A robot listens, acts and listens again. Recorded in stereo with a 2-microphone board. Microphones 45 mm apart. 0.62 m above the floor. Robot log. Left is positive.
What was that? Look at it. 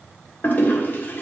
note: The toilet flushing: about 45° left or 135° left.
cmd yaw +45
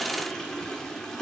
note: So it is at 10° left.
cmd yaw +10
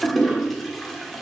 end: Found it: a toilet flushing, straight ahead.